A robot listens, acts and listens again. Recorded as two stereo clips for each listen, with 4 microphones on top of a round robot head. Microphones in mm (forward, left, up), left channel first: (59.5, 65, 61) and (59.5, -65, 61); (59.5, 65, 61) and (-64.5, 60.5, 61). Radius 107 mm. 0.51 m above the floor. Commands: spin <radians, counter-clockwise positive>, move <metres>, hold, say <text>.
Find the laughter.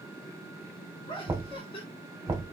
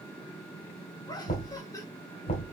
spin 1.05
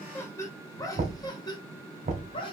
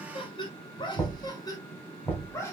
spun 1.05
spin 1.13
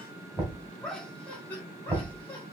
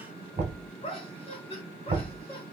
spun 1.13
spin 0.26
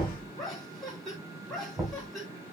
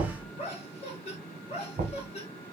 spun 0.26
say Facing the laughter, 1 to 2 m away.